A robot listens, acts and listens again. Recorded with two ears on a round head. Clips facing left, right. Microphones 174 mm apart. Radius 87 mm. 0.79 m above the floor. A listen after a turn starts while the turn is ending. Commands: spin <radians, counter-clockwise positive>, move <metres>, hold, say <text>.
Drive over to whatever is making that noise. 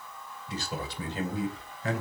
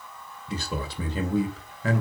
spin -1.22
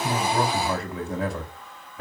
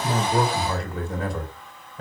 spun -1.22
move 1.0
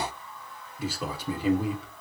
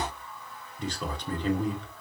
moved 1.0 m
move 1.0
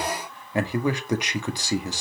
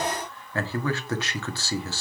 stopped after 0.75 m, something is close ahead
spin 0.26
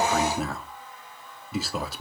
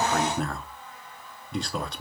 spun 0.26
say I am next to the man speaking.